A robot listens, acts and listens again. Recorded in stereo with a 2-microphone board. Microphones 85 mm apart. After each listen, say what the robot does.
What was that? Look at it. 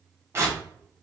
Turn 30° right.
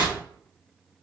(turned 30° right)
Turn 115° right.
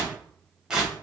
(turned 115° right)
Turn 10° right.
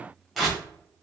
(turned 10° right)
Facing the tearing paper.